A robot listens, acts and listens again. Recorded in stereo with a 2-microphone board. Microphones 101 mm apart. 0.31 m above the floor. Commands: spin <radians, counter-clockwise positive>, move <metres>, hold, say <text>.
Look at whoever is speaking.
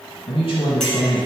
spin 1.13
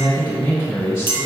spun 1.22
spin 0.52
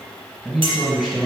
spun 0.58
say Facing the man speaking, 1 to 2 m away.